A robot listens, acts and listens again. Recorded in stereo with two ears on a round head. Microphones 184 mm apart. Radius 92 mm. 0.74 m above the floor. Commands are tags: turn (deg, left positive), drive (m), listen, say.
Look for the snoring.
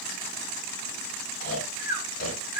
<turn deg="45"/>
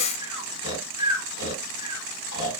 <turn deg="95"/>
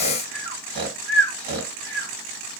<turn deg="-25"/>
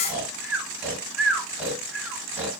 <turn deg="-10"/>
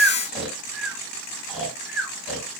<say>Facing the snoring, 1 to 2 m away.</say>